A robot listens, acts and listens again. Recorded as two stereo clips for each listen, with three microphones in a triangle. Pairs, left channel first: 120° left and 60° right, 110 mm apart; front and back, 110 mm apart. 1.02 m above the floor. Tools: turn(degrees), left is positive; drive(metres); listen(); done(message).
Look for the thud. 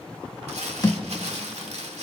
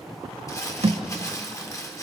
turn(degrees=180)
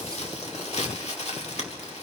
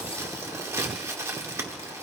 done("Facing where the thud came from. I can't hear it now.")